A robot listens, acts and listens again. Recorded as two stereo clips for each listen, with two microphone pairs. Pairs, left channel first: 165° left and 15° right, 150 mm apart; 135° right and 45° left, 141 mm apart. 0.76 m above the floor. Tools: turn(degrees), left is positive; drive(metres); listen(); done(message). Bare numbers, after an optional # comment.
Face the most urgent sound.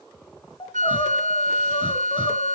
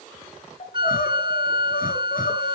# The crying: 140° right.
turn(-140)
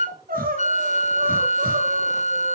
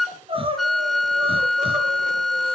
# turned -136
done("Found it: crying, straight ahead.")